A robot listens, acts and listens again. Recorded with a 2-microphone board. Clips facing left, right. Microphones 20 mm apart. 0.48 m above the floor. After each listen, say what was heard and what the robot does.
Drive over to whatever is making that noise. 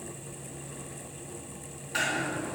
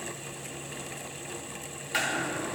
Turn 90° right.
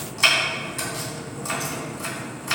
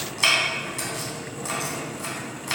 Drive 1.0 m forward.
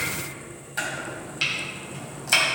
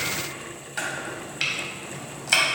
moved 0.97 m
The chopping is now 10° right. Turn 10° right.
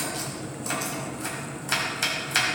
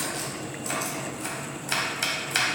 Drive 1.0 m forward.
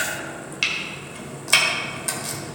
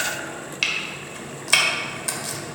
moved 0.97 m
Drive 1.0 m forward.
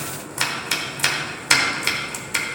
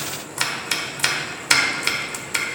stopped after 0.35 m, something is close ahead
I am next to the chopping.